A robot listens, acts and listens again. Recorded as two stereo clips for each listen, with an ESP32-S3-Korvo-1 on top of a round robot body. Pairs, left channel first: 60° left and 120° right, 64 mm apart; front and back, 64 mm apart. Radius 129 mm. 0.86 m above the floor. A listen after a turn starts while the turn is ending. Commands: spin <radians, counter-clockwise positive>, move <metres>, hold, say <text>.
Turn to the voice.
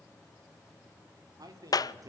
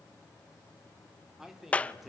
spin -1.57
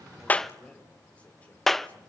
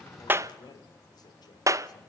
spin -0.17
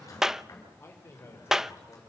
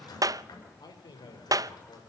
say Found it: a man speaking, straight ahead.